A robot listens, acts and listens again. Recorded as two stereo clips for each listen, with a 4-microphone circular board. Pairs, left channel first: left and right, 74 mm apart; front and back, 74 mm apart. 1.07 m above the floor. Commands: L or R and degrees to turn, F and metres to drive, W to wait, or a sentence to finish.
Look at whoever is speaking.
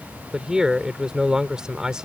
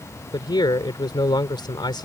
R10
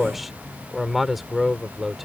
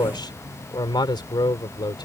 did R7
Facing the man speaking.